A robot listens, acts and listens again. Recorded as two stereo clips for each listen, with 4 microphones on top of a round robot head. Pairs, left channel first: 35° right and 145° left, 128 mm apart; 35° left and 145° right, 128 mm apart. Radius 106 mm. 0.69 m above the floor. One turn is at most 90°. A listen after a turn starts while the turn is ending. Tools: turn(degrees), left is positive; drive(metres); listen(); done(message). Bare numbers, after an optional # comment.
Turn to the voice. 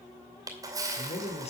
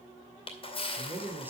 # The man speaking: 70° right.
turn(-70)
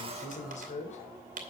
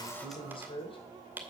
# The man speaking is now 10° right.
turn(-10)
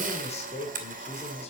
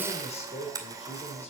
done("Facing the man speaking, 2 to 4 m away.")